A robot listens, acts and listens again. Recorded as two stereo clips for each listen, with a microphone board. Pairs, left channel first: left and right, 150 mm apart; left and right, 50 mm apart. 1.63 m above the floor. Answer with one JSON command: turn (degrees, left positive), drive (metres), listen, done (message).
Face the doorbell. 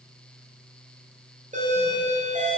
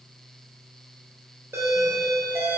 {"turn": -55}
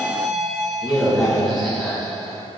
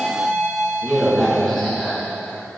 {"done": "Facing the doorbell."}